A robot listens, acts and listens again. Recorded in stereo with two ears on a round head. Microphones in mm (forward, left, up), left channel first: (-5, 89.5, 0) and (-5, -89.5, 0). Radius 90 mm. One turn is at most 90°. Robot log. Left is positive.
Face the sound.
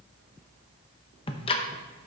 note: The ticking: about 25° left or 155° left.
cmd yaw +25
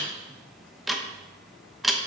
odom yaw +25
end: Facing the ticking, under 1 m away.